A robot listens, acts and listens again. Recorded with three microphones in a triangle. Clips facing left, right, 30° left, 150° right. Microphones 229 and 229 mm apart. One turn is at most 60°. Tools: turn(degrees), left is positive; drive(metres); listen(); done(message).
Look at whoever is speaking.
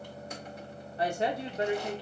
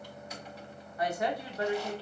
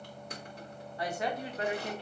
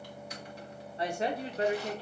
turn(degrees=60)
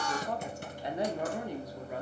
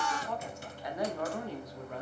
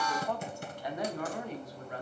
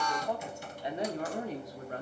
turn(degrees=60)
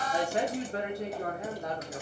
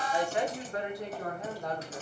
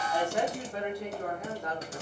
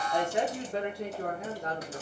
turn(degrees=60)
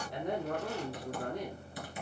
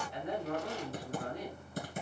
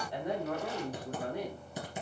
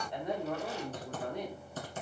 turn(degrees=60)
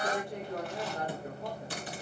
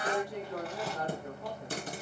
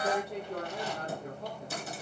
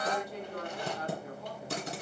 turn(degrees=20)
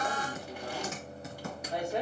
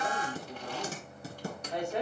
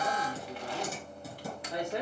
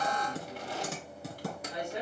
turn(degrees=10)
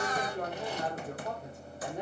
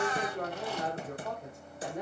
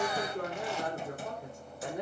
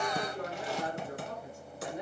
done("Found it: a woman speaking, straight ahead, 2 to 4 m away.")